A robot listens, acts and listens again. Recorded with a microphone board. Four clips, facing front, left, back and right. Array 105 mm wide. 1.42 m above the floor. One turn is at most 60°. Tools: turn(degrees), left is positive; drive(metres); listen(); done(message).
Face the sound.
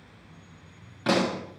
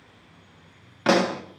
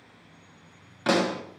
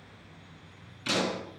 turn(degrees=60)
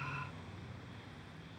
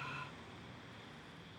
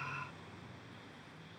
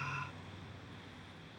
turn(degrees=35)
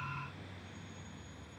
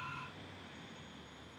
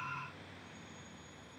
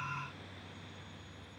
done("I heard a pop from this way, but can't make it out now.")